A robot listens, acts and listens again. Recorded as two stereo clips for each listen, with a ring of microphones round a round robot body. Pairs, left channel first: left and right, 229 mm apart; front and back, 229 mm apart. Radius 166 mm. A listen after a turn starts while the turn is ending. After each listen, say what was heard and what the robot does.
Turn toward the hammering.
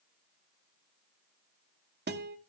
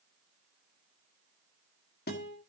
Keep listening.
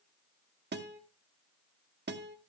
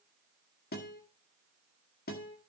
Keep listening.
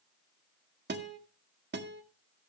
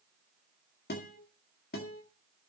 I can't make out hammering, only a guitar.